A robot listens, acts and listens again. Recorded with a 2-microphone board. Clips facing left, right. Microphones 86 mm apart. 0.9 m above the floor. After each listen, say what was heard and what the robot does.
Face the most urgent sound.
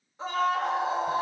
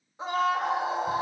The scream: about 15° right or 165° right. Turn 15° right.
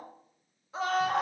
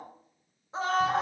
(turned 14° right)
So it is at 150° right. Turn 150° right.
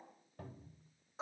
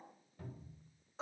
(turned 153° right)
Facing the scream, 1 to 2 m away.